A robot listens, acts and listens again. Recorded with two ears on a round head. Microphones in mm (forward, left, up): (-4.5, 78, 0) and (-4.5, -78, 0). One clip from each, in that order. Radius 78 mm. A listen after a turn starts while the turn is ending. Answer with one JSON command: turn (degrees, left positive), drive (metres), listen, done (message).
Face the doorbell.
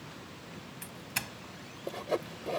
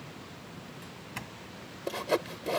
{"turn": 90}
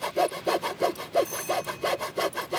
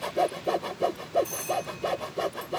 {"done": "Found it: a doorbell, straight ahead."}